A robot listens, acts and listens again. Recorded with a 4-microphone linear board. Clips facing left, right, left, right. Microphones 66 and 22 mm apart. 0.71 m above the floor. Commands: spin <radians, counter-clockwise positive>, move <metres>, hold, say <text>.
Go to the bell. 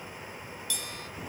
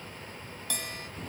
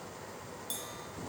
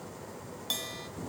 spin -0.87
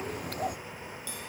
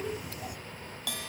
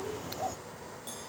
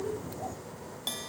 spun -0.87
spin -1.40
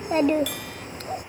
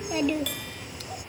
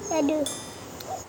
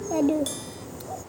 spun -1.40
hold
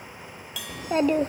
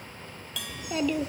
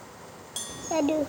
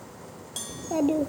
move 1.0
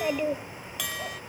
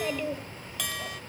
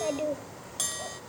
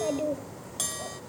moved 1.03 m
move 1.0
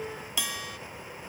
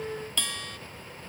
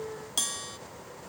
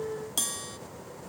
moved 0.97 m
spin 0.17
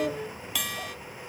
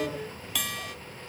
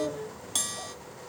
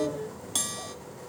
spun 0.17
move 1.0
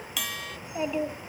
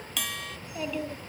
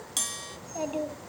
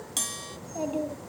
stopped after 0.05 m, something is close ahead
say I am next to the bell.